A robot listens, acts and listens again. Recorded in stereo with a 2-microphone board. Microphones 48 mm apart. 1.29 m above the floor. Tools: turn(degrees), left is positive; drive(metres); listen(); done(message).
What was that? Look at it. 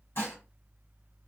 turn(degrees=55)
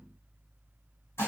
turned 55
turn(degrees=65)
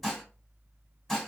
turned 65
done("Found it: dishes clattering, straight ahead, 1 to 2 m away.")